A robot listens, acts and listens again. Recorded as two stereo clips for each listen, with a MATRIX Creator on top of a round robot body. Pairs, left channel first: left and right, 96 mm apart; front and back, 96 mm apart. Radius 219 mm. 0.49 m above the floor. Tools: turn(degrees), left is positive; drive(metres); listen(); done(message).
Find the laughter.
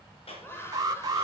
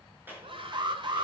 turn(degrees=155)
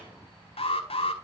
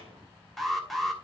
listen()
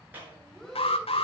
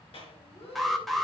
done("Facing the laughter, over 4 m away.")